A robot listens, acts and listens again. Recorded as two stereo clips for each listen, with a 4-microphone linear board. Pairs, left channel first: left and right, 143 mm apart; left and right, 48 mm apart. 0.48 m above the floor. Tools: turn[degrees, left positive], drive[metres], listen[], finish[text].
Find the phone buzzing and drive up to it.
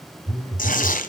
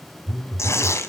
Action: turn[30]
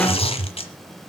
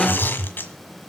Thought: So it is at 140° left.
Action: turn[140]
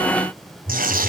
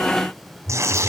Thought: The phone buzzing is now 15° left.
Action: turn[15]
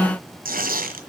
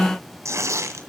Action: listen[]
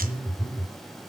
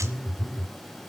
Action: drive[1.0]
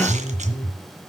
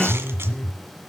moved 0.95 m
Action: drive[1.0]
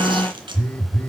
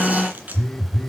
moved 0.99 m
Thought: The phone buzzing is now 10° left.
Action: turn[10]
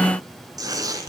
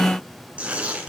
Action: drive[1.0]
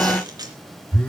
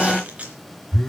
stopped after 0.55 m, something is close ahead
Thought: The phone buzzing is now 10° left.
Action: turn[10]
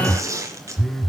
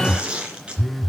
Action: finish[Arrived at the phone buzzing, straight ahead.]